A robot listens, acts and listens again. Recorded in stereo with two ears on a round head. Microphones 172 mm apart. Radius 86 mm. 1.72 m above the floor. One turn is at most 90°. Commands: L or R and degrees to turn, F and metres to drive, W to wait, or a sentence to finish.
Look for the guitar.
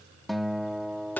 L30
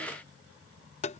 W
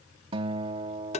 R30
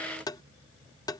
W
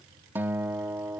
R10
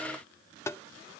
W
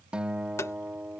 Facing the guitar.